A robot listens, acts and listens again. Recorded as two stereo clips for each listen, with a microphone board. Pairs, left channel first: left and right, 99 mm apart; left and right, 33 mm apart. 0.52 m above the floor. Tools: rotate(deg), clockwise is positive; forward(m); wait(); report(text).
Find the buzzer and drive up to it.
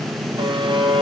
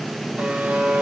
rotate(60)
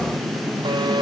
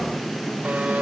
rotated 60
wait()
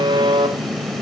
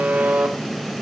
rotate(55)
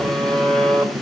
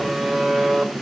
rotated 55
forward(1.0)
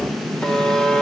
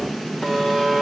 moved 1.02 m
rotate(-10)
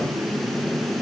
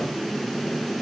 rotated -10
wait()
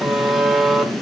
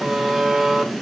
forward(1.0)
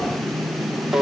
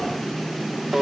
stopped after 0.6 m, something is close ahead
report("I am next to the buzzer.")